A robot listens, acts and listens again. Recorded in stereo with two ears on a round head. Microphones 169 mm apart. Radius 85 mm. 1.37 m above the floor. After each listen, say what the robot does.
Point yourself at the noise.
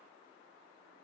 Keep listening.
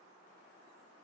Keep listening.
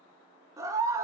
Turn 15° right.
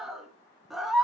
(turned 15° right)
Found it: a scream, straight ahead.